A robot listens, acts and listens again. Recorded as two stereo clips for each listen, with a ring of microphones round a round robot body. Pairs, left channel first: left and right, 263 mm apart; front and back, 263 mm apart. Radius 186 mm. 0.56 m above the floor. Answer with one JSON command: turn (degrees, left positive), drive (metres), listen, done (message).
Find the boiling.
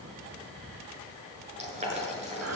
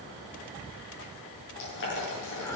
{"turn": -25}
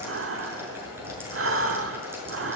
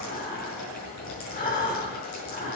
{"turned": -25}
{"turn": -10}
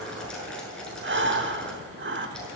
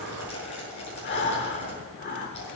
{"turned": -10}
{"done": "Facing the boiling."}